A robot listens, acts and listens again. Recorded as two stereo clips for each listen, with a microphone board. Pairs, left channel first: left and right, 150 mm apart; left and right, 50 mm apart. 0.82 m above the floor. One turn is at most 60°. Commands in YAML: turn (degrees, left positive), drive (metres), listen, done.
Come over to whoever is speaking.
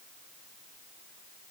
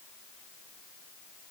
listen: true
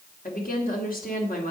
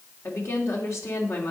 turn: 60
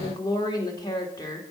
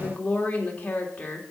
turn: 30
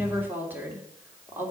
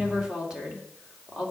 turn: -15
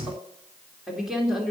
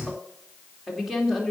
drive: 1.0
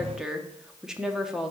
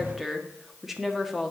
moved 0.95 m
drive: 1.0
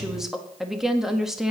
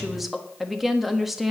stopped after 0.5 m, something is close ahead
done: "Arrived at the woman speaking, straight ahead."